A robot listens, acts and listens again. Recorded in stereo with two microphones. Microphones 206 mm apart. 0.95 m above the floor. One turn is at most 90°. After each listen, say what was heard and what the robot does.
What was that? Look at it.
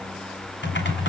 The typing on a keyboard: about 60° left or 120° left. Turn 60° left.
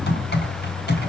So it is at 55° left. Turn 55° left.
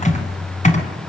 The typing on a keyboard is now 35° left. Turn 35° left.
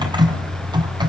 The typing on a keyboard is now 20° right. Turn 20° right.
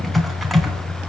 Found it: typing on a keyboard, straight ahead.